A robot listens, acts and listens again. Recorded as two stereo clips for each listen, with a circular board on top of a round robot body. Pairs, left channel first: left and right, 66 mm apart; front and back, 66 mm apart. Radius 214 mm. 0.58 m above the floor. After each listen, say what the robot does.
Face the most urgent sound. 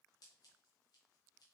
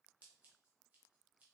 Keep listening.
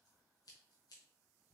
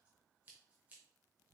Keep listening.
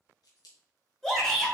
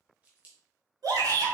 Turn 175° left.
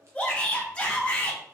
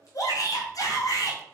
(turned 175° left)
Turn 20° left.
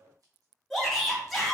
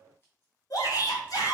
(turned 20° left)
Facing the shout, 2 to 4 m away.